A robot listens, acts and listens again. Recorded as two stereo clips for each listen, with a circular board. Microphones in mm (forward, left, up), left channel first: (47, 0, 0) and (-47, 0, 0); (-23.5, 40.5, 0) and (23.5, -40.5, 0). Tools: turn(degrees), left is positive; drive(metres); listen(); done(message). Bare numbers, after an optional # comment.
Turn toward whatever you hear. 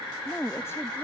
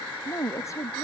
# The woman speaking: 65° left.
turn(65)
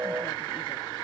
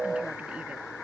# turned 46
# Nothing new. It was at 15° left.
turn(15)
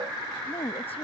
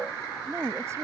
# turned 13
done("Facing the woman speaking.")